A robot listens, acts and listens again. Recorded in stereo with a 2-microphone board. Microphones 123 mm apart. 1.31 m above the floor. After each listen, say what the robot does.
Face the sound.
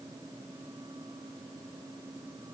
Keep listening.
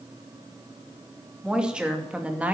Turn 30° right.
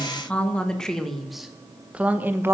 Turn 20° right.
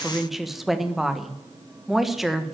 Turn 30° left.
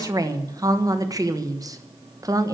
Turn 30° right.
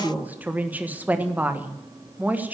Turn 15° right.
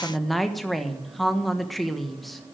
Facing the woman speaking.